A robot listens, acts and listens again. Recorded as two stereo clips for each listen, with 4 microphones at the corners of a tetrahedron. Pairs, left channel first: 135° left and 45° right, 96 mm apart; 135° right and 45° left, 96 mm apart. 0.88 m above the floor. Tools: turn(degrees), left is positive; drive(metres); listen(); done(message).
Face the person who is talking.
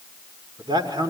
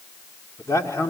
turn(degrees=-80)
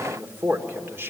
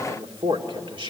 turn(degrees=20)
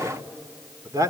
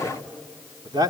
done("Facing the man speaking, 2 to 4 m away.")